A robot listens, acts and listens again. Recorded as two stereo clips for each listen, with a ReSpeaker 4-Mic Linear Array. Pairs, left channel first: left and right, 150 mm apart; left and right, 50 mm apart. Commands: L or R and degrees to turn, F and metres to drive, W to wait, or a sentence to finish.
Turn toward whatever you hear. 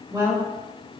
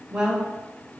R20
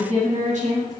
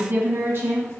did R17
R125
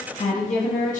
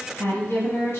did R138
L60
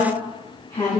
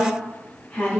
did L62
L35
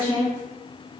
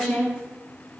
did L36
L10
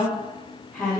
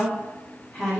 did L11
Facing the woman speaking.